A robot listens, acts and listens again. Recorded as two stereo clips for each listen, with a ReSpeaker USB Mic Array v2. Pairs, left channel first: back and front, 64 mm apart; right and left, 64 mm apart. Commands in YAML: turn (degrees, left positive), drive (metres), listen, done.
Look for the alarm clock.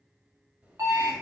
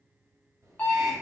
turn: -25
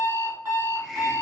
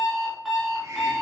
done: "Found it: an alarm clock, straight ahead, 1 to 2 m away."